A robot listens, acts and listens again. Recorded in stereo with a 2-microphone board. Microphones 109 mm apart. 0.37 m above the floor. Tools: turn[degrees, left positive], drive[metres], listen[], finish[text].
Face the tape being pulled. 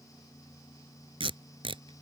Thought: The tape being pulled: about 60° right or 120° right.
Action: turn[-60]
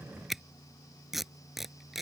Action: finish[Facing the tape being pulled.]